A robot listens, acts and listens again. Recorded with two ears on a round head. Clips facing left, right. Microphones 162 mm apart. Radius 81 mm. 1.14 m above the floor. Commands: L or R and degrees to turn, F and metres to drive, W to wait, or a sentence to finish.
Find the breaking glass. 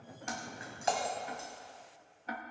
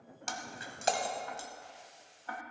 R40
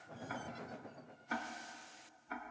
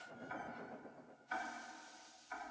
W
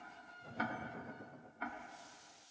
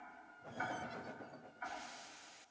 I heard breaking glass, but can't make it out now. It was about straight ahead or 100° right.